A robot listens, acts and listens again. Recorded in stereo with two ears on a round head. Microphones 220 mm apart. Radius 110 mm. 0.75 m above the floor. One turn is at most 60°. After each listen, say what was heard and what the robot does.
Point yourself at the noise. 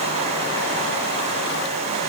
Keep listening.
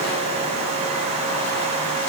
Keep listening.
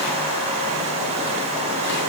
I can't make out anything to turn to.